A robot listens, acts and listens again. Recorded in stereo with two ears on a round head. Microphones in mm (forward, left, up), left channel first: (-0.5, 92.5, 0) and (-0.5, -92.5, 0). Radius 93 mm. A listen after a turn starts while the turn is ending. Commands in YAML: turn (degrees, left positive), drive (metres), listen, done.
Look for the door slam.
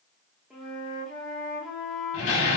turn: 75
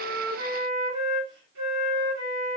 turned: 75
listen: true
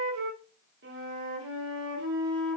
done: "I heard a door slam, but can't make it out now. It was about straight ahead or 30° left."